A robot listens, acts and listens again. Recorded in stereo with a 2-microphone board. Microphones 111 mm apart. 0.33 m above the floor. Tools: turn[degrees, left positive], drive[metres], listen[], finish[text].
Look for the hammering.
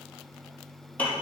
Action: listen[]
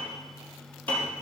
Action: listen[]
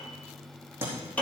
Thought: The hammering: about 20° right or 160° right.
Action: turn[-20]
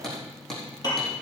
Action: finish[Found it: hammering, straight ahead, over 4 m away.]